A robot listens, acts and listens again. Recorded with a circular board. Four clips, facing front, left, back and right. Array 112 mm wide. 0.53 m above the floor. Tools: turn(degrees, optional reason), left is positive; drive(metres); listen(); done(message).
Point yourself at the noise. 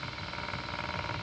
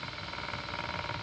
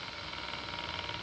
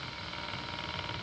listen()
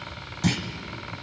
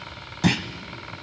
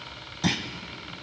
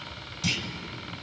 turn(degrees=100, reason="The clunk: 100° left.")
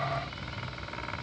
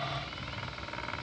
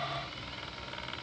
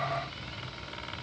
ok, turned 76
turn(degrees=25, reason="Nothing new. It was at 25° left.")
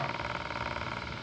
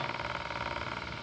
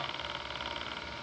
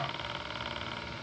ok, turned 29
done("I heard a clunk from this way, but can't make it out now.")